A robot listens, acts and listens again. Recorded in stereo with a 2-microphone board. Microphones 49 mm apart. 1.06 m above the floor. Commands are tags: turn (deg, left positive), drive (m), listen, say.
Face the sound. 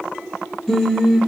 <turn deg="30"/>
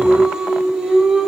<turn deg="-10"/>
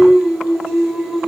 <say>Found it: singing, straight ahead, 2 to 4 m away.</say>